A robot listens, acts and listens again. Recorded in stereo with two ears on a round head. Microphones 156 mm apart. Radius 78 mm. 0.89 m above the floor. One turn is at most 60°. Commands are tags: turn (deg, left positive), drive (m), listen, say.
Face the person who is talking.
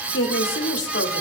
<turn deg="60"/>
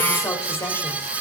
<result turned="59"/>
<turn deg="15"/>
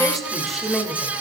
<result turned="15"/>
<say>Found it: a woman speaking, straight ahead, 2 to 4 m away.</say>